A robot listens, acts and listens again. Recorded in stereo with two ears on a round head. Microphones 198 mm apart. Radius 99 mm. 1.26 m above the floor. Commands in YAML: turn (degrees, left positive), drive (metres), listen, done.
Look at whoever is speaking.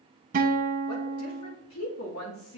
turn: 70
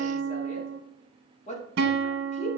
turn: 35
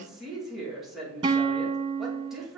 done: "Found it: a woman speaking, straight ahead."